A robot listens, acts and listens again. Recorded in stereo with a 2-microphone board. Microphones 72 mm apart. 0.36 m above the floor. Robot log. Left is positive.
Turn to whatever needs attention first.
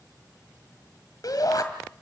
note: The shout: about 60° left or 120° left.
cmd yaw +60
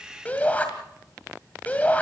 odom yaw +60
note: So it is at 25° left.
cmd yaw +25
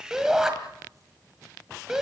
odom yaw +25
note: The shout is now 10° right.
cmd yaw -10
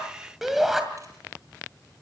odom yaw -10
end: Facing the shout.